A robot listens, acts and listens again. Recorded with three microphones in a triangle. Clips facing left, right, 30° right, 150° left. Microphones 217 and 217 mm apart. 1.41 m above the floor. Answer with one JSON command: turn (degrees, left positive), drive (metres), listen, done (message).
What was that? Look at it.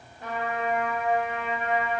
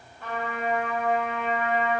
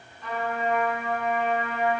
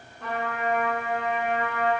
{"turn": 165}
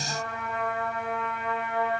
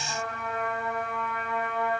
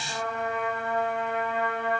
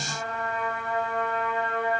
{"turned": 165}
{"turn": 25}
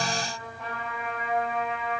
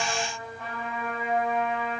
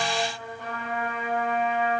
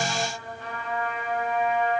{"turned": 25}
{"done": "Found it: a trumpet, straight ahead, 2 to 4 m away."}